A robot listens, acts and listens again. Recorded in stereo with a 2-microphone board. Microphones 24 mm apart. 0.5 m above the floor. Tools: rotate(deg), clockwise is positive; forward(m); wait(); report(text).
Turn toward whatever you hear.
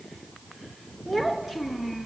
rotate(30)
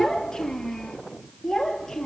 rotate(-20)
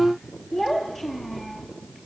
report("Found it: a child speaking, straight ahead.")